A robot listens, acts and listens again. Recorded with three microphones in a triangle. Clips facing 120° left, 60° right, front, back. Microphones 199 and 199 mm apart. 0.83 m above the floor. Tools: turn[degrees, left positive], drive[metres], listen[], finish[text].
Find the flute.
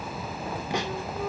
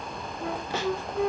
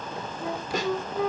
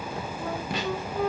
Thought: The flute: 85° right.
Action: turn[-85]
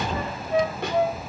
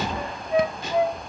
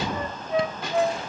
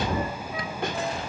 Thought: The flute is now 20° left.
Action: turn[20]
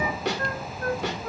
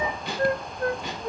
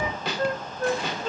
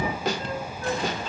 Action: finish[Found it: a flute, straight ahead, 1 to 2 m away.]